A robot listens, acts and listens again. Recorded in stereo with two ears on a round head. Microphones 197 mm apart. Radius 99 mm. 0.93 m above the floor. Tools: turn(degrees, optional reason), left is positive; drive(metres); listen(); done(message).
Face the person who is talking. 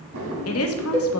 turn(degrees=70, reason="The woman speaking: about 70° left or 110° left.")
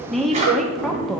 done("Found it: a woman speaking, straight ahead, under 1 m away.")